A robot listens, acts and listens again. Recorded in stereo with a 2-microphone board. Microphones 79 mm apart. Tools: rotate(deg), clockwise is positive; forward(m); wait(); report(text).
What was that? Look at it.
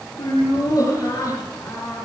rotate(-45)
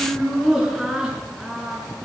rotate(15)
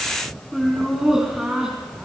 rotate(10)
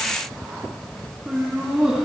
rotate(10)
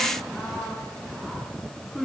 report("Facing the laughter, 2 to 4 m away.")